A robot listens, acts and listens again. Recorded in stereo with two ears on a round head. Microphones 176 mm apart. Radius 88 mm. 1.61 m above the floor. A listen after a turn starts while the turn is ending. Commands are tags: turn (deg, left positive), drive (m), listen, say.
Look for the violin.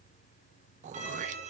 <turn deg="-40"/>
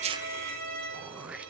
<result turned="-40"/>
<turn deg="-105"/>
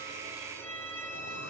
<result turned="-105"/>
<turn deg="10"/>
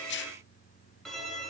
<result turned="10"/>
<say>Found it: a violin, straight ahead, over 4 m away.</say>